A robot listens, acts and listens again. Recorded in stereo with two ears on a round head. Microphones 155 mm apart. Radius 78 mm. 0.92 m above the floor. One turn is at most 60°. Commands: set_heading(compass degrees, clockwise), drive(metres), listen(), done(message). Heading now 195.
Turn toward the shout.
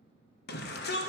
set_heading(135)
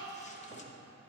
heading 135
set_heading(90)
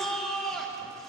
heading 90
done("Facing the shout.")